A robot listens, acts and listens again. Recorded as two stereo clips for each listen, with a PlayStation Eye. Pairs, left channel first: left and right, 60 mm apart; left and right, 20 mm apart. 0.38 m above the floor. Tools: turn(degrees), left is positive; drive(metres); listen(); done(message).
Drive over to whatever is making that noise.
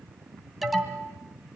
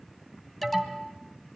turn(degrees=-30)
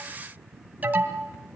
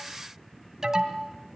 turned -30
turn(degrees=-145)
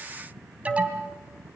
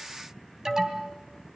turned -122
turn(degrees=-25)
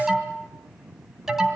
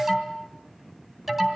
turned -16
drive(metres=1.0)
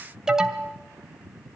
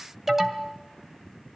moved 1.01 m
turn(degrees=-10)
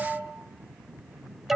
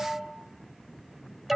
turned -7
drive(metres=1.0)
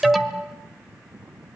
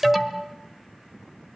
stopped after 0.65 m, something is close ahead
done("Arrived at the alarm, straight ahead.")